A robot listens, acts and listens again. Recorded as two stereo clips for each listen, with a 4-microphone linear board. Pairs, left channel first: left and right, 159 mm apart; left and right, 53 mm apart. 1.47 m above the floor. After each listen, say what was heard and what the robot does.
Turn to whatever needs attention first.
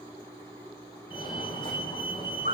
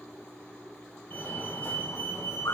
The fire alarm: about 30° left or 150° left. Turn 30° left.
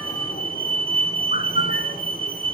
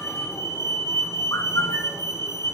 So it is at 115° left. Turn 115° left.
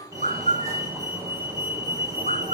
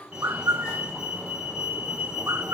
The fire alarm is now 20° right. Turn 20° right.
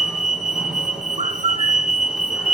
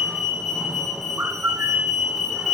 Found it: a fire alarm, straight ahead.